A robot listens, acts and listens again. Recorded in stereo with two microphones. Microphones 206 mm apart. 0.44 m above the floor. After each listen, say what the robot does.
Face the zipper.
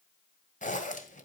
Turn 35° left.
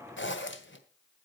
Turn 105° left.
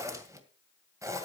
Turn 15° right.
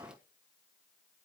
Keep listening.
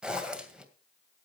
Found it: a zipper, straight ahead, 2 to 4 m away.